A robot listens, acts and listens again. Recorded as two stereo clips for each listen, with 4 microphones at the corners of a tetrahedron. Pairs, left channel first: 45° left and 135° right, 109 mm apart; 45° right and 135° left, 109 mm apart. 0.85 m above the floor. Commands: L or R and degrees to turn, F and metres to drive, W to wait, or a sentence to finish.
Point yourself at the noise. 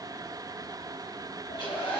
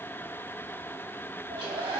L90
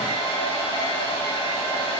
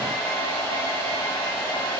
L10
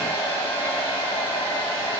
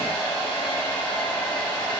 Facing the hair dryer.